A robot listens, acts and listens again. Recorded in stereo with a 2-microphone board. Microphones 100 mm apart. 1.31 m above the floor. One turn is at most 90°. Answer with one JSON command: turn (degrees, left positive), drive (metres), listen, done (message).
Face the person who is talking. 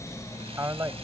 {"turn": -30}
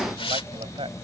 {"listen": true}
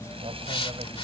{"listen": true}
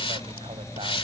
{"done": "I heard a man speaking, but can't make it out now. It was about straight ahead or 120° right."}